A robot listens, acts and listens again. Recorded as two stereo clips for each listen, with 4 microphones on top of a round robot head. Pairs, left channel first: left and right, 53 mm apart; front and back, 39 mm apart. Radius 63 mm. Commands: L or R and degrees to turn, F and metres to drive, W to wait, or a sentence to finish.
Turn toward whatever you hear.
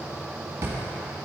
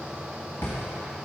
R50
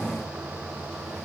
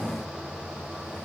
W
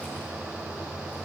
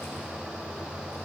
W
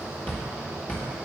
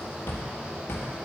L25
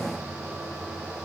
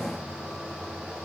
W
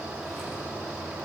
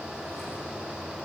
W
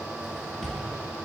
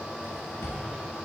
L10
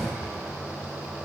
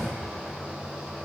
W
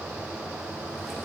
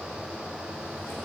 W
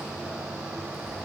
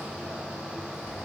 I heard a drawer from this way, but can't make it out now.